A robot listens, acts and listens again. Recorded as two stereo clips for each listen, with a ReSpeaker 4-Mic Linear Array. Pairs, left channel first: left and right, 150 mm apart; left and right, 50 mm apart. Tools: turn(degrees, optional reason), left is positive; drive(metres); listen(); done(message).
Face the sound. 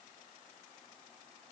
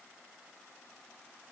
listen()
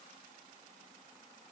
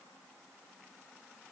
listen()
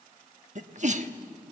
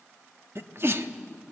turn(degrees=-50, reason="The sneeze: about 50° right or 130° right.")
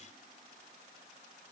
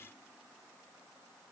listen()
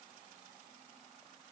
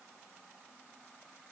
done("I heard a sneeze, but can't make it out now. It was about straight ahead or 80° right.")